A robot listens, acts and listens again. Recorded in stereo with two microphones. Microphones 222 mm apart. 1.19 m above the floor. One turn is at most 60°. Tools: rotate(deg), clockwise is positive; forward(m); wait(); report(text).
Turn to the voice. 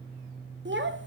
rotate(55)
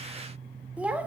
report("Facing the child speaking, 1 to 2 m away.")